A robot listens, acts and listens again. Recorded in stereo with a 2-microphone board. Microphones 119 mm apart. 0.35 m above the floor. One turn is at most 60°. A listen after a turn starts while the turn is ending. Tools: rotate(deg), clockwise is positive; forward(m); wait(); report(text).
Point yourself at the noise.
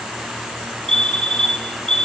rotate(-30)
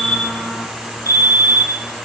rotate(-60)
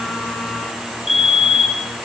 rotate(-60)
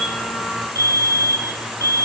rotate(-30)
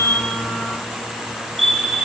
report("Found it: a fire alarm, straight ahead.")